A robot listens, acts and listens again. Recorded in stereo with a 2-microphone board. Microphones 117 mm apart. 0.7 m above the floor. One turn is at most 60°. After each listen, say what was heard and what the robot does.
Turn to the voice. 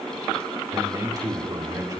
The man speaking: about 35° right or 145° right. Turn 35° right.
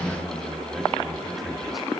Keep listening.
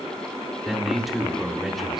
Facing the man speaking, 2 to 4 m away.